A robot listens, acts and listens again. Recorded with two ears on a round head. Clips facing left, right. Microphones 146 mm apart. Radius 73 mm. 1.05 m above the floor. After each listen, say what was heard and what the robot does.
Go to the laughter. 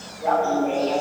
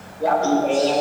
The laughter: about 55° right or 125° right. Turn 55° right.
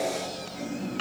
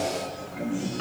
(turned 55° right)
So it is at 70° right. Turn 70° right.
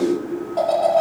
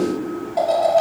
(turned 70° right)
The laughter is now 10° right. Turn 10° right.
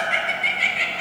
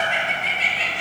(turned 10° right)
The laughter is now 10° left. Turn 10° left.
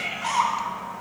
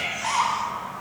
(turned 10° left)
Drive 1.0 m forward.
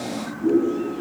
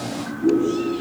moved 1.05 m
Drive 1.0 m forward.
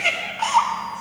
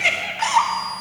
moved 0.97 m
Drive 1.0 m forward.
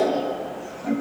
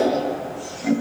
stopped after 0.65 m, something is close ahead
The laughter is now 15° right. Turn 15° right.
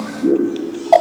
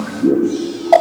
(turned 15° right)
Arrived at the laughter, straight ahead.